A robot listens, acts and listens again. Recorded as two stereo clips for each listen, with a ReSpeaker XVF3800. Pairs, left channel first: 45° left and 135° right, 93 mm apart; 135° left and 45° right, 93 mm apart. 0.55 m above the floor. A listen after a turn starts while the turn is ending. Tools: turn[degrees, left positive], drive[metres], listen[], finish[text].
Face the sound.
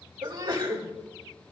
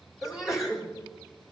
Thought: The sneeze: 125° right.
Action: turn[-125]
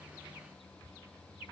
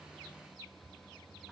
Action: finish[Facing where the sneeze came from. I can't hear it now.]